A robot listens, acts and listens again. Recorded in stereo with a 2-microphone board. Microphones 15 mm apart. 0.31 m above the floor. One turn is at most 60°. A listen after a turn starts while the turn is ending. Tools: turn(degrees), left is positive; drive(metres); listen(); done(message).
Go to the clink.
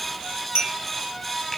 turn(degrees=-60)
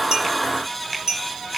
turn(degrees=-40)
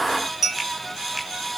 turn(degrees=-30)
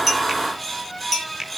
drive(metres=1.0)
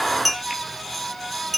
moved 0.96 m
drive(metres=1.0)
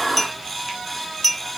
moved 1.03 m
drive(metres=1.0)
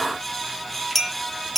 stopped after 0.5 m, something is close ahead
done("Arrived at the clink, straight ahead.")